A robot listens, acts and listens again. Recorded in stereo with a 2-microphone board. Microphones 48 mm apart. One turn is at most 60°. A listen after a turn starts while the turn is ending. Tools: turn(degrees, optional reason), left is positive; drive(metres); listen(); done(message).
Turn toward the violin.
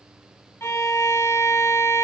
turn(degrees=60, reason="The violin: about 60° left or 120° left.")
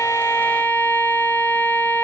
turn(degrees=40, reason="So it is at 40° left.")
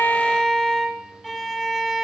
done("Facing the violin, 1 to 2 m away.")